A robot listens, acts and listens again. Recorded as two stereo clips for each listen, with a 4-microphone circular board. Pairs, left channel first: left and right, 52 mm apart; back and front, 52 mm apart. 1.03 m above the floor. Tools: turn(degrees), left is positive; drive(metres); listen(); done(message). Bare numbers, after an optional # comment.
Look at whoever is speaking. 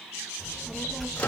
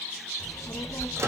# The child speaking: straight behind.
turn(180)
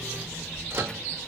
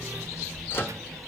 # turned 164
# The child speaking is now 15° left.
turn(15)
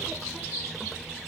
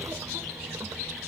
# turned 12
done("Facing the child speaking.")